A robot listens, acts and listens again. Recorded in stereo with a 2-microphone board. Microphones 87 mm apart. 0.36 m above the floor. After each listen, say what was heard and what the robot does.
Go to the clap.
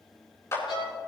The clap: about 35° left or 145° left. Turn 35° left.
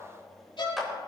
Drive 1.0 m forward.
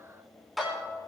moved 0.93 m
Drive 1.0 m forward.
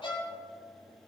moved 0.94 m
Keep listening.
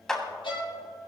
The clap is now 10° left. Turn 10° left.
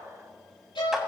Keep listening.
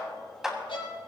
Drive 1.0 m forward.
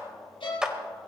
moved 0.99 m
The clap is now 10° right. Turn 10° right.
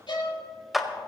Drive 1.0 m forward.
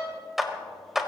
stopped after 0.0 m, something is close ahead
Arrived at the clap, straight ahead.